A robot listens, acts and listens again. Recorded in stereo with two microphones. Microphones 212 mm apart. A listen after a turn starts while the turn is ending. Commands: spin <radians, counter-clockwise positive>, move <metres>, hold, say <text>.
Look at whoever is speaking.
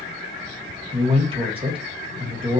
spin -0.44
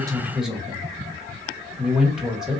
say Found it: a man speaking, straight ahead.